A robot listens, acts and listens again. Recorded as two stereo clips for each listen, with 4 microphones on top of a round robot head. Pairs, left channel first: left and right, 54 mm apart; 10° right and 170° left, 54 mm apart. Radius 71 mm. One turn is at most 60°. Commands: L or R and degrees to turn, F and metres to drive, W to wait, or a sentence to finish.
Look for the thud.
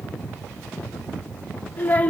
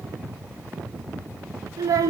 W
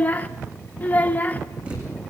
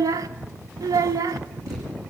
R60
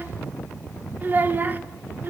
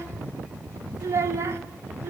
R60
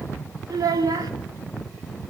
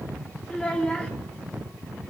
R40
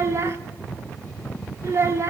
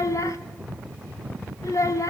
Facing where the thud came from. I can't hear it now.